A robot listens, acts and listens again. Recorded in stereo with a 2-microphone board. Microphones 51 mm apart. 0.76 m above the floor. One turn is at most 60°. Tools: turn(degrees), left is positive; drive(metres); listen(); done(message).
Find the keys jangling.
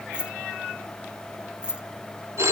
turn(degrees=-20)
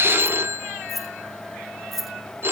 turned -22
done("Found it: keys jangling, straight ahead.")